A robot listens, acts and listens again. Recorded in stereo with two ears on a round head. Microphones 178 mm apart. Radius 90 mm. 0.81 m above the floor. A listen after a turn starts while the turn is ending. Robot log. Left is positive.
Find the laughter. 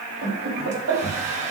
cmd yaw -90
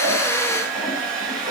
cmd idle
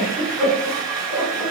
end: Facing the laughter.